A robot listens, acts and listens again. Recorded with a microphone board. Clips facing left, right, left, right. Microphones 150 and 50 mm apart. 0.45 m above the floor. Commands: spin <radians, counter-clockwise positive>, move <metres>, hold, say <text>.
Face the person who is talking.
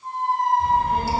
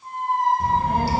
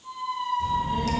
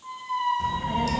spin -1.13
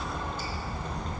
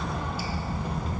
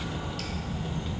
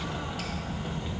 say Found it: a child speaking, straight ahead, 1 to 2 m away.